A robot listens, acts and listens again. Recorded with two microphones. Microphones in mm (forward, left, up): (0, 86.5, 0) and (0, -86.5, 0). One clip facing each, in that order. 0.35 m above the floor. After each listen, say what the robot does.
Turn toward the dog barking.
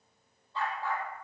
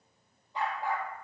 Turn 30° right.
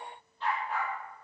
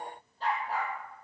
Turn 145° right.
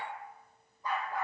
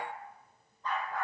Turn 10° left.
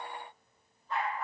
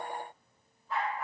Found it: a dog barking, straight ahead, over 4 m away.